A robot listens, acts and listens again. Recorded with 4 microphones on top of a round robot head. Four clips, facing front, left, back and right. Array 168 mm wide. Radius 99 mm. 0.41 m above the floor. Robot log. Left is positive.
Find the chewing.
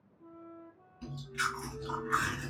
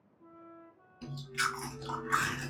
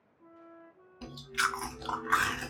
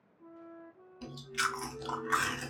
note: The chewing: 165° right.
cmd yaw -165
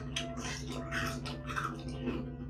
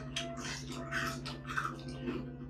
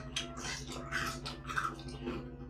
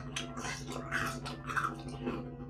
note: The chewing is now 75° right.
cmd yaw -75
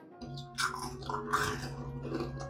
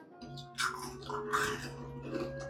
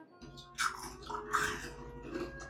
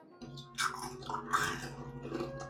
note: The chewing is now 35° right.
cmd yaw -35
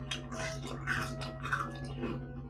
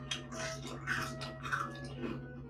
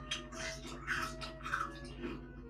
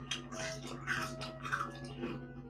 note: The chewing is now 15° right.
cmd yaw -15
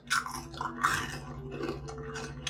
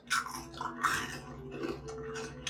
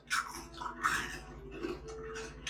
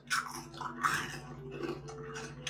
end: Facing the chewing, under 1 m away.